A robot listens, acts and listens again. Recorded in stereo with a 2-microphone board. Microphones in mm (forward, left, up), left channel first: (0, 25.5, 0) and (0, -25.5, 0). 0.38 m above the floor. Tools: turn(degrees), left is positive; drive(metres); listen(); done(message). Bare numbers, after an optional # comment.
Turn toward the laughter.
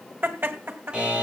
# The laughter: about 45° right or 135° right.
turn(-45)
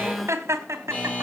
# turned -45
# So it is at 65° right.
turn(-65)
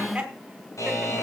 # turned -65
# The laughter is now 15° right.
turn(-15)
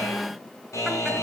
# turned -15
listen()
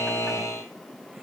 listen()
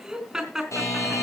done("Facing the laughter.")